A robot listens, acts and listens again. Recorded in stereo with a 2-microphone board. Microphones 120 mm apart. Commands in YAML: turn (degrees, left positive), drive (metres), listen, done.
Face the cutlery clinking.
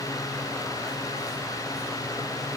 listen: true
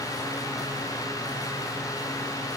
listen: true
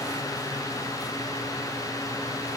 done: "I can't make out cutlery clinking to turn to."